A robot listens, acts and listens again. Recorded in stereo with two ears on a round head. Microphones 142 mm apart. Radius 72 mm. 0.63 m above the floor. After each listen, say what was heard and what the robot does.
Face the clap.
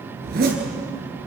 Keep listening.
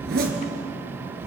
Keep listening.
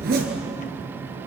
I can't make out a clap to turn to.